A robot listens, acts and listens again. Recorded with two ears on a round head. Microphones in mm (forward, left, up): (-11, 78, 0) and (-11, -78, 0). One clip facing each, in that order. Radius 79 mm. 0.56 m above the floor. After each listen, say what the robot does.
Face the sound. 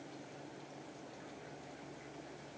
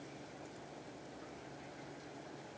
Keep listening.
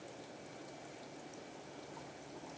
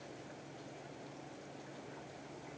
Keep listening.
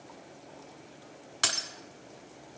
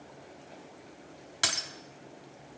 Turn 30° right.
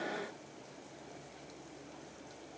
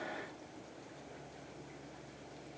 Keep listening.
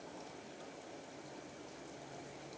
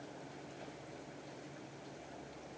I heard breaking glass, but can't make it out now. It was about 20° left or 140° right.